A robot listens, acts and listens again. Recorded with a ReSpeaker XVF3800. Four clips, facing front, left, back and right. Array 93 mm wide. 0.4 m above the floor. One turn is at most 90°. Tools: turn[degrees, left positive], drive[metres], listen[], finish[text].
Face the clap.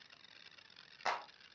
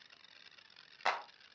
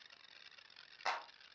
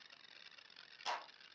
Thought: The clap: 85° left.
Action: turn[85]
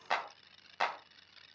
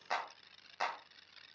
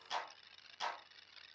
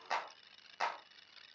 Action: finish[Found it: a clap, straight ahead, 1 to 2 m away.]